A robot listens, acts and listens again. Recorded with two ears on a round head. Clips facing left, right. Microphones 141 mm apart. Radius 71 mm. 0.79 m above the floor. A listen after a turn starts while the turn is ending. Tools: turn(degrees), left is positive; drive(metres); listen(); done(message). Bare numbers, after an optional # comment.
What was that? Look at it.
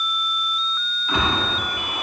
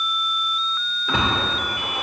# The splash: about 65° right or 115° right.
turn(-65)
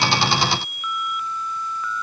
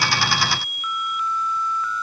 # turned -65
listen()
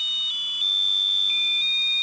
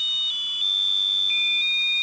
done("I heard a splash, but can't make it out now. It was about straight ahead or 50° right.")